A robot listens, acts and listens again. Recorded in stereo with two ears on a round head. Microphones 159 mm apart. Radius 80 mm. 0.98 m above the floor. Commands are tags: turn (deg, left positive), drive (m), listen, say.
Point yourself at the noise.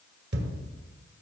<turn deg="-65"/>
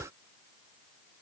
<listen/>
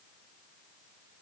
<say>I heard a thud, but can't make it out now. It was about straight ahead or 50° right.</say>